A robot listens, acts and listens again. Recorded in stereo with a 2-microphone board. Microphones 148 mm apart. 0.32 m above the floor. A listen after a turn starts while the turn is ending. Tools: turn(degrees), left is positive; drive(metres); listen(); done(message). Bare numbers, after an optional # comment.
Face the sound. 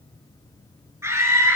# The scream: about 20° right or 160° right.
turn(-20)
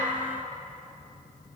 listen()
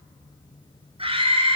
# So it is at 140° right.
turn(-140)
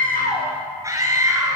# The scream is now 20° right.
turn(-20)
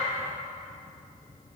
listen()
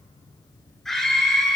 done("Facing the scream.")